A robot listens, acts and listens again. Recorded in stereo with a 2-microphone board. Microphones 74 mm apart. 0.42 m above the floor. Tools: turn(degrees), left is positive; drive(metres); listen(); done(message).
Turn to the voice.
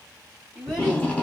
turn(degrees=-15)
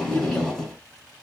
listen()
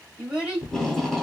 turn(degrees=-30)
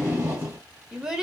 turn(degrees=-30)
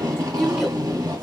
turn(degrees=30)
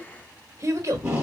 turn(degrees=-45)
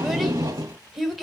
done("Found it: a child speaking, straight ahead, 1 to 2 m away.")